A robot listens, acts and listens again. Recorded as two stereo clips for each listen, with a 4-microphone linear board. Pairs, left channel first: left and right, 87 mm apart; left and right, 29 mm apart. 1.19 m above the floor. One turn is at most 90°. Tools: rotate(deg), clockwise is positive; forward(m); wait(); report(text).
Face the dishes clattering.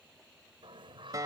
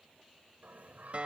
wait()
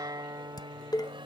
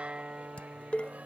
rotate(-50)
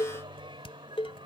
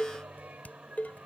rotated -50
rotate(-80)
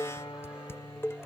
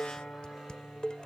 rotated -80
rotate(-30)
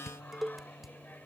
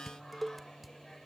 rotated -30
report("Facing the dishes clattering.")